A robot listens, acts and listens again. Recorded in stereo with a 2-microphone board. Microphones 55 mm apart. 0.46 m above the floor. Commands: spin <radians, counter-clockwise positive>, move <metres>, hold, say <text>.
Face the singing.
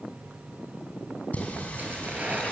spin 0.44
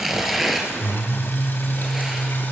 spin 0.70
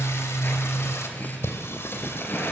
spin 2.18
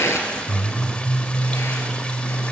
spin 0.44
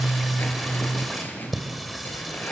say Found it: singing, straight ahead.